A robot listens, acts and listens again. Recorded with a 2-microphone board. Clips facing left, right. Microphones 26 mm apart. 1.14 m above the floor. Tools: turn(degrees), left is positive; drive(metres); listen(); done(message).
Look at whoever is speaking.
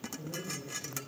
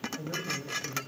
turn(degrees=-60)
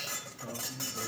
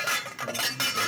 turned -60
listen()
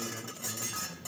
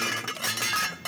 listen()
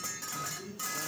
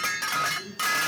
done("Found it: a man speaking, straight ahead.")